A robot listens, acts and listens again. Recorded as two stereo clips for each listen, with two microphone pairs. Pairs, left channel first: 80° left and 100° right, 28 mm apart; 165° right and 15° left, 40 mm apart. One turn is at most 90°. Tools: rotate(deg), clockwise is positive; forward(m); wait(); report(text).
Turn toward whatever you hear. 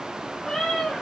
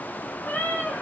rotate(-90)
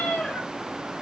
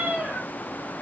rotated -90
rotate(-65)
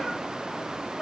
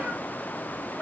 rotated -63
wait()
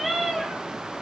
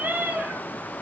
rotate(20)
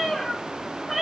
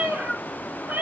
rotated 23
rotate(15)
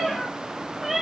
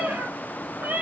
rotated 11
rotate(15)
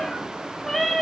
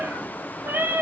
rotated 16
report("Found it: a cat meowing, straight ahead.")